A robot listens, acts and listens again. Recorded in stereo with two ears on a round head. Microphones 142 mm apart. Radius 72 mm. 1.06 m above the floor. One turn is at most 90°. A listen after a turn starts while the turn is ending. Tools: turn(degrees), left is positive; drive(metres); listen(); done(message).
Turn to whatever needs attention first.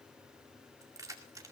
listen()
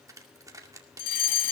turn(degrees=60)
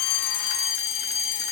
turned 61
turn(degrees=50)
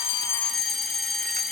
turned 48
done("Facing the fire alarm.")